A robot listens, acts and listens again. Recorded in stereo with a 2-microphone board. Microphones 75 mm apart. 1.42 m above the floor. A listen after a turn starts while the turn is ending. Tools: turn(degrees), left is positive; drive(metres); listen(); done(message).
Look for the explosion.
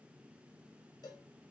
listen()
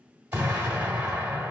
turn(degrees=-20)
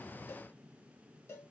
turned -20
listen()
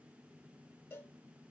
done("I heard an explosion, but can't make it out now. It was about straight ahead or 140° right.")